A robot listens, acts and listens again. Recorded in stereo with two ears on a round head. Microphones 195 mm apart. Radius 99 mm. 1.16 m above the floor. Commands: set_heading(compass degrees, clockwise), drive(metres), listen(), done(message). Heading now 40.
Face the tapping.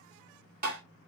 set_heading(80)
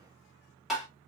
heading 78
done("Found it: tapping, straight ahead, 2 to 4 m away.")